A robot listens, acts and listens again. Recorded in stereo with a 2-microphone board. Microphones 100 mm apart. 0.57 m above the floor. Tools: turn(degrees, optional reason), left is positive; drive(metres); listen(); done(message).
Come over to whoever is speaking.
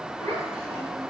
turn(degrees=-75, reason="The child speaking: about 75° right or 105° right.")
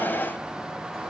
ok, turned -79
listen()
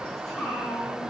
drive(metres=1.0)
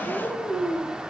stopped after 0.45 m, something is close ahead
done("Something is in my way. I am facing the child speaking but have not reached it.")